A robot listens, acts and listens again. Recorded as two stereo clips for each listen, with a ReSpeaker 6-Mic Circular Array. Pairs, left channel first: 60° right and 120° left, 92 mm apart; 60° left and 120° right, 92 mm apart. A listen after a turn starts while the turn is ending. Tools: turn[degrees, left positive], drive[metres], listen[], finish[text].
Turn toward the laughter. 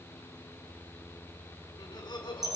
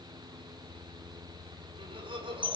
Thought: The laughter: 95° right.
Action: turn[-95]
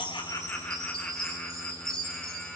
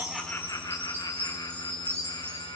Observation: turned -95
Thought: The laughter is now 10° left.
Action: turn[10]
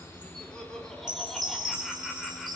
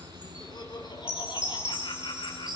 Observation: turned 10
Thought: The laughter is now 25° left.
Action: turn[25]
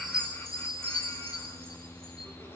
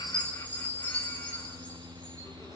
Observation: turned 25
Action: listen[]
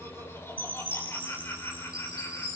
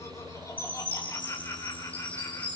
Action: finish[Found it: laughter, straight ahead.]